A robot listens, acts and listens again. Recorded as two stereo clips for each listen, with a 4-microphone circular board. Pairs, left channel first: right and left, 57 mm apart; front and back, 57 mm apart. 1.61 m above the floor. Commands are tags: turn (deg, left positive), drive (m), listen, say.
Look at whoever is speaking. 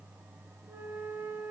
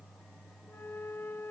<listen/>
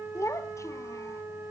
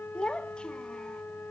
<turn deg="-75"/>
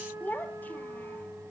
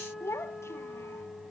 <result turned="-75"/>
<turn deg="-35"/>
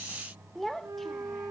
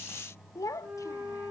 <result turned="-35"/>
<say>Facing the child speaking, 1 to 2 m away.</say>